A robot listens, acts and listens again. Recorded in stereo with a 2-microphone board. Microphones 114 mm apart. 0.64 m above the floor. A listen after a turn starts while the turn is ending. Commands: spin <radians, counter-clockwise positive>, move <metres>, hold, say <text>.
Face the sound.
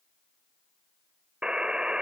spin -0.52
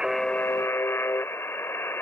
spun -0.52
spin 0.35
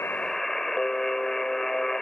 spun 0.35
say Found it: a buzzer, straight ahead.